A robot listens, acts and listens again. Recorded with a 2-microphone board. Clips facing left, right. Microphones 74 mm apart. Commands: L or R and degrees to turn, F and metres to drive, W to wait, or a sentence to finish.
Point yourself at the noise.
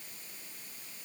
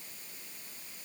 W
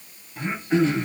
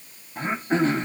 R40
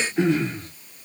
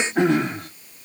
R100
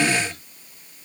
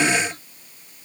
W
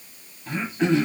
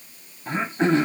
R40
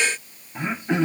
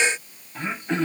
L10
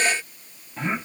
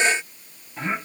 Facing the throat clearing.